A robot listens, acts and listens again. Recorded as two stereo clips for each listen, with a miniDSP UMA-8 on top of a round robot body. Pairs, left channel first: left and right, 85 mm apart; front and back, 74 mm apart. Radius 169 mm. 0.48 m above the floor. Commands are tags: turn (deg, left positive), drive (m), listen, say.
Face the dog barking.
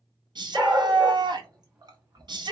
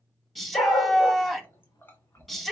<turn deg="-15"/>
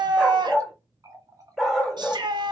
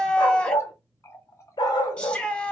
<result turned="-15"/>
<say>Found it: a dog barking, straight ahead.</say>